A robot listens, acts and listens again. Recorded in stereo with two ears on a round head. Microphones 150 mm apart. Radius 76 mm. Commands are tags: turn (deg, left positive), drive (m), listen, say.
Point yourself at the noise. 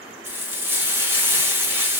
<turn deg="-30"/>
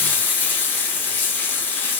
<turn deg="10"/>
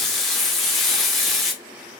<say>Found it: frying, straight ahead.</say>